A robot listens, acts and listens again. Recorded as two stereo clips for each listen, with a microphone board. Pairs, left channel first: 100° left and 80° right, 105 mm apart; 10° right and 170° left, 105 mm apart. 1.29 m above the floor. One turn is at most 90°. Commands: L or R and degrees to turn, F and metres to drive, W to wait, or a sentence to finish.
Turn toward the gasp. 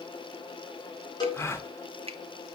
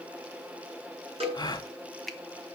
L35
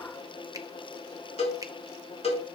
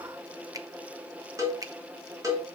Facing where the gasp came from. I can't hear it now.